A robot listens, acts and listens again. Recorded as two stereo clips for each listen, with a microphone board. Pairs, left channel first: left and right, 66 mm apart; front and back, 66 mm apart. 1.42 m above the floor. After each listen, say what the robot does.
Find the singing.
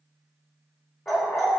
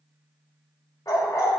Keep listening.
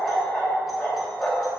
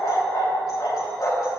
Keep listening.
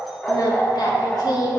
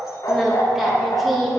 Turn 85° left.
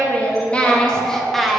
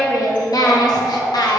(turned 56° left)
Found it: singing, straight ahead.